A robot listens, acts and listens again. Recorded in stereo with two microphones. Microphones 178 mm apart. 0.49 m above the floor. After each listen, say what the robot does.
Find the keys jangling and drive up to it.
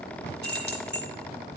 Turn 70° right.
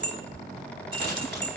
Turn 30° right.
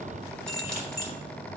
Drive 1.0 m forward.
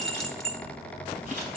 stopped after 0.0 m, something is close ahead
Blocked. The keys jangling is further on, straight ahead.